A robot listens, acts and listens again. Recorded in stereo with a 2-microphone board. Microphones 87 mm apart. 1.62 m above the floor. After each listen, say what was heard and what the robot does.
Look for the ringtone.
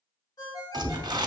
The ringtone: about 55° left or 125° left. Turn 55° left.
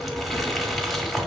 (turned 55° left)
Keep listening.
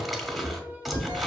Keep listening.
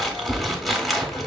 I heard a ringtone, but can't make it out now. It was about straight ahead or 70° left.